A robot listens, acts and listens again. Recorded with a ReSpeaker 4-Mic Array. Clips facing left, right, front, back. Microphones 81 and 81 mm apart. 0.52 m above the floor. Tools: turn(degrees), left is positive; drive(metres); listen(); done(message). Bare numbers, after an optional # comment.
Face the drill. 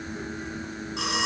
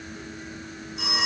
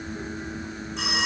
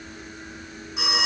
listen()
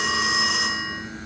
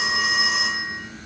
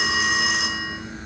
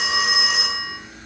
listen()
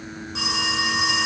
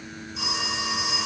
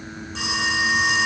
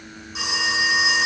done("I can't make out a drill to turn to.")